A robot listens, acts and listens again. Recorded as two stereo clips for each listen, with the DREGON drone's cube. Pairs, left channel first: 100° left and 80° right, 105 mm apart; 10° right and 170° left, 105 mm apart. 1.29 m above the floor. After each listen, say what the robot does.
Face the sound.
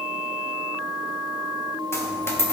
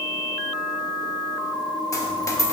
Turn 40° left.
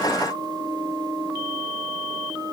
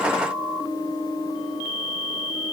Facing where the dropped coin came from. I can't hear it now.